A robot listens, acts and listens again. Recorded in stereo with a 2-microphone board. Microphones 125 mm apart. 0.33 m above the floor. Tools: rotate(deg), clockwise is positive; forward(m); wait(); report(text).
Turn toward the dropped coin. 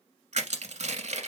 wait()
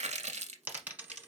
rotate(30)
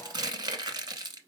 wait()
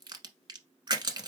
report("I heard a dropped coin, but can't make it out now. It was about 15° left or 135° right.")